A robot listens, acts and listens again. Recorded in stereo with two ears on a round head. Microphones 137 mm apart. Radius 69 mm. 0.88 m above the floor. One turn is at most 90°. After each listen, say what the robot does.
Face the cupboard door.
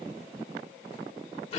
Keep listening.
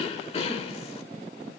Keep listening.
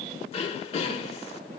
I can't make out a cupboard door, only throat clearing.